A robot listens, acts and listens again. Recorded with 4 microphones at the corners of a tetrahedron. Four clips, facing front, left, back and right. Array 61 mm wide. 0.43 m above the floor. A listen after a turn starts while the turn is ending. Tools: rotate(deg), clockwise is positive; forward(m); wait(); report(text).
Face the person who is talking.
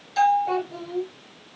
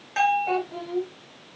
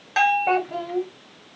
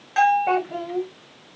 rotate(145)
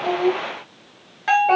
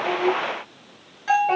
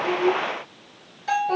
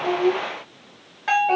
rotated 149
report("Found it: a child speaking, straight ahead, 1 to 2 m away.")